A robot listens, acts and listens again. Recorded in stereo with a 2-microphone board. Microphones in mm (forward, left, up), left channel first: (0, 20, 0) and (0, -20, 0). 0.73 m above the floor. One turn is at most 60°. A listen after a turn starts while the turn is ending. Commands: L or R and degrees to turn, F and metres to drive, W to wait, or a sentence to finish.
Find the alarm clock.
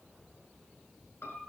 W
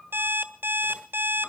R60
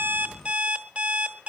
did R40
R35
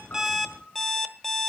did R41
Found it: an alarm clock, straight ahead.